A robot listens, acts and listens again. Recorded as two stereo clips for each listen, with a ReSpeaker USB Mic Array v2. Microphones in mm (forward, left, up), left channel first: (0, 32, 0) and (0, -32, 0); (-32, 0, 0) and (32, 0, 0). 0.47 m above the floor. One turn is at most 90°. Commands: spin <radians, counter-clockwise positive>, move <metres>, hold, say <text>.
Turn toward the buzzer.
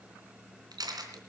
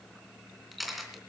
hold
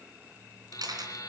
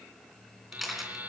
spin 1.05
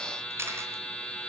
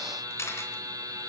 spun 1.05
spin 0.17
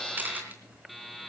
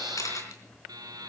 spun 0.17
say Facing the buzzer.